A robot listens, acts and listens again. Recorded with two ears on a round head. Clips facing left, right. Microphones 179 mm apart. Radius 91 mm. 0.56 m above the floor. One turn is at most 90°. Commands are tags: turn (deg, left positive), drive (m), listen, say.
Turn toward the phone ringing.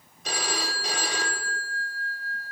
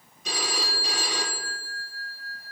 <turn deg="55"/>
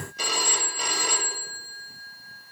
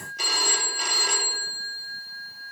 <turn deg="70"/>
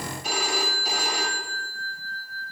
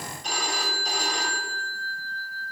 <say>Facing the phone ringing, 1 to 2 m away.</say>